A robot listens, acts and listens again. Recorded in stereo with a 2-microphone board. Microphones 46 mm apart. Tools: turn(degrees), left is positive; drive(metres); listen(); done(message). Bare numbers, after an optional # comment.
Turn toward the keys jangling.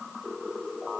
listen()
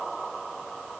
listen()
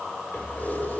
# The keys jangling: about 40° left or 140° left.
turn(40)
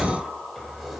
done("Found it: keys jangling, straight ahead.")